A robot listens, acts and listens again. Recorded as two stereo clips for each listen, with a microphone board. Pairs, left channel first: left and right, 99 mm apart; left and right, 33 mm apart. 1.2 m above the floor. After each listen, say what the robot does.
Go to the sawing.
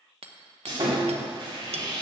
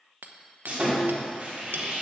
Turn 45° right.
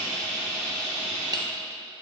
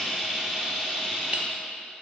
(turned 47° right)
Drive 1.0 m forward.
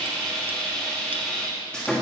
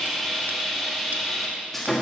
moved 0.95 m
Turn 10° left.
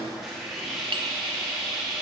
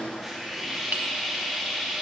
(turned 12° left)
Drive 1.0 m forward.
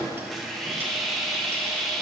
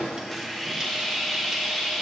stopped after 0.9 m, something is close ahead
I am next to the sawing.